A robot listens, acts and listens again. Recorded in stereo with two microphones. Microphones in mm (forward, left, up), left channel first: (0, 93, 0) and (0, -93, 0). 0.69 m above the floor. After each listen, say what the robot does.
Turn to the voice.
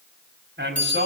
Turn 90° right.
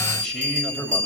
Found it: a man speaking, straight ahead, 2 to 4 m away.